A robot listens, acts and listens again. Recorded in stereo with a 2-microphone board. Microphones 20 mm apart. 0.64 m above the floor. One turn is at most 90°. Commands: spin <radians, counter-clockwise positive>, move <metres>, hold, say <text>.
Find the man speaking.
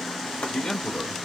spin 0.96
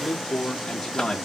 spin 0.44
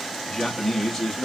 say Facing the man speaking.